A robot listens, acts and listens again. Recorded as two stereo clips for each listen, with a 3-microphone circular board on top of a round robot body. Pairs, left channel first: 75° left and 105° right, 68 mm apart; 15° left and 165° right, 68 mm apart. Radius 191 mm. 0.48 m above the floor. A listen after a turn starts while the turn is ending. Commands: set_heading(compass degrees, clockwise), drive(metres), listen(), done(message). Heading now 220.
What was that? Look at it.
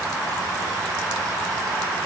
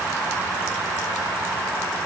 listen()
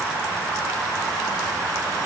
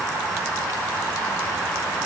listen()
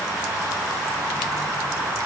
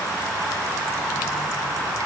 done("I can't make out anything.")